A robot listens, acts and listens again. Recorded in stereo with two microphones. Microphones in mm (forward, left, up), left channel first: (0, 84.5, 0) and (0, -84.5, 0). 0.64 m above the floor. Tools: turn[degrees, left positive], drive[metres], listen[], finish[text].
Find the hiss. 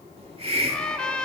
Thought: The hiss: about 35° right or 145° right.
Action: turn[-35]
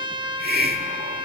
Thought: So it is at 105° right.
Action: turn[-105]
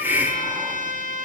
Thought: The hiss is now 10° right.
Action: turn[-10]
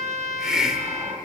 Action: finish[Facing the hiss, 1 to 2 m away.]